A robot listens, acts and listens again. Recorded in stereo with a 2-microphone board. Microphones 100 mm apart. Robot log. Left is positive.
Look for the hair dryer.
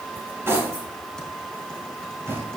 cmd idle
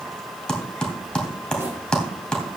cmd idle
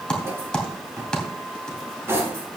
end: I can't make out a hair dryer to turn to.